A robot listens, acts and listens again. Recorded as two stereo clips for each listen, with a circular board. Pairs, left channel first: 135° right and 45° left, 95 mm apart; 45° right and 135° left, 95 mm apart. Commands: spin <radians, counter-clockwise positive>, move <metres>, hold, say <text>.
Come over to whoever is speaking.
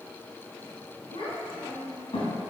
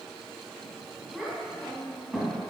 spin -2.44
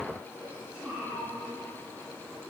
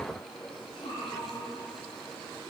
spin -0.61
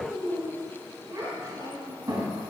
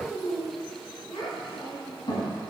spin -0.17
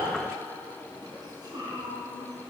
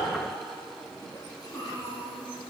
move 1.0
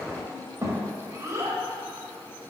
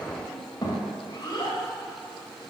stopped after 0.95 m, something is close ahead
spin -0.17
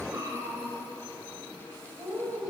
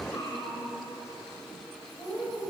say Arrived at the child speaking, straight ahead.